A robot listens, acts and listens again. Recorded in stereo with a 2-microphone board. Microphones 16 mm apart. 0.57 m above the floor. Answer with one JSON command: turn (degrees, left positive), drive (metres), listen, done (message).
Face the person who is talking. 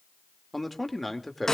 {"turn": -30}
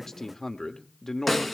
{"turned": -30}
{"turn": 25}
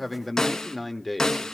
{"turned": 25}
{"turn": -10}
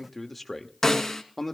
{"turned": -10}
{"done": "Facing the man speaking, 1 to 2 m away."}